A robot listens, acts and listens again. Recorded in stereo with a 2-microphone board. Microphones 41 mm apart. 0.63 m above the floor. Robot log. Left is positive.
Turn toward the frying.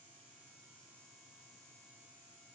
cmd idle
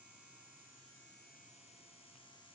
cmd idle
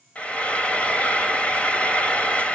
note: The frying: about 35° left or 145° left.
cmd yaw +35
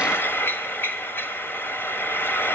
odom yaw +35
note: So it is at 115° left.
cmd yaw +115
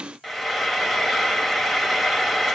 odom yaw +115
end: Facing the frying, 1 to 2 m away.